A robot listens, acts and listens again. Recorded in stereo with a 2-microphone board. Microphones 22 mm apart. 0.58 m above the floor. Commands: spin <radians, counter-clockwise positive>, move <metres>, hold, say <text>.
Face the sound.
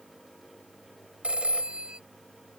spin -1.05
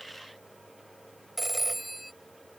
say Found it: a phone ringing, straight ahead.